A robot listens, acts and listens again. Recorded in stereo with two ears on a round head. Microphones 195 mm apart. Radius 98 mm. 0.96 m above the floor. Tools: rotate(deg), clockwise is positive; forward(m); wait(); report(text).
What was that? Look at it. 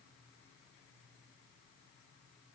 wait()
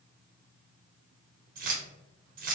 rotate(40)
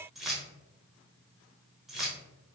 report("Found it: keys jangling, straight ahead.")